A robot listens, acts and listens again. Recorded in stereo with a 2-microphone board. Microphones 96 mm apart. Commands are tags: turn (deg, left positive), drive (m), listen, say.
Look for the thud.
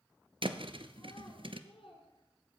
<turn deg="-90"/>
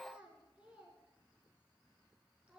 <say>Facing where the thud came from. I can't hear it now.</say>